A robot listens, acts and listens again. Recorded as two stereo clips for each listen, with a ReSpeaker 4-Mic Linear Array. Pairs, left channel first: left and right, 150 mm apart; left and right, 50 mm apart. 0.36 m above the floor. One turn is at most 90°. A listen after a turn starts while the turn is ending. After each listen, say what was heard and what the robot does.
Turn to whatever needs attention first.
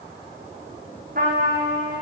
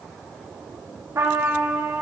Keep listening.
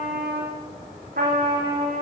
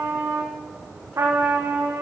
Keep listening.
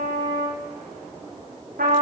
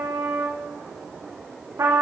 I can't make out anything urgent, only a trumpet.